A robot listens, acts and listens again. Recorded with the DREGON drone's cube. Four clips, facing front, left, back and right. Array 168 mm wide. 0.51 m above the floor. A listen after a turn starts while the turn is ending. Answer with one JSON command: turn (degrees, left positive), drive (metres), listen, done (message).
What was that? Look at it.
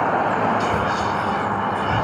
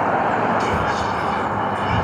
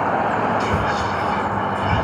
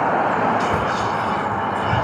{"turn": 180}
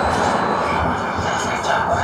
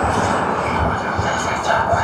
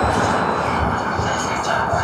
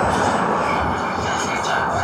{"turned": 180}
{"turn": 55}
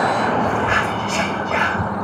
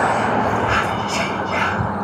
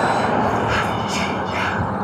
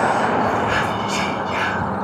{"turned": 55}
{"turn": 10}
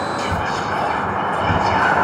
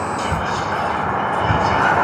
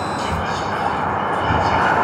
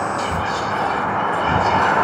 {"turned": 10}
{"done": "Found it: whispering, straight ahead."}